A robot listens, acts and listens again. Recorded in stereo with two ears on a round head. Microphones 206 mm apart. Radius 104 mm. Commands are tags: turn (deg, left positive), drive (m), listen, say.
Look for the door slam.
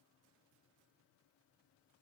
<listen/>
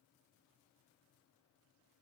<listen/>
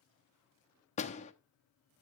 <turn deg="30"/>
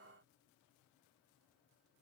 <listen/>
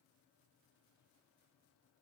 <say>I heard a door slam, but can't make it out now. It was about straight ahead or 120° left.</say>